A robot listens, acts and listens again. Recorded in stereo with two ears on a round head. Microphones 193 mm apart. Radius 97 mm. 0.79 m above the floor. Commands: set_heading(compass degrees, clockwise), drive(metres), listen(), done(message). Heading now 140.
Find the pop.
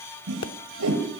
set_heading(85)
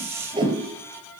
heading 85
listen()
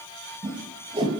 done("I heard a pop, but can't make it out now. It was about straight ahead or 70° left.")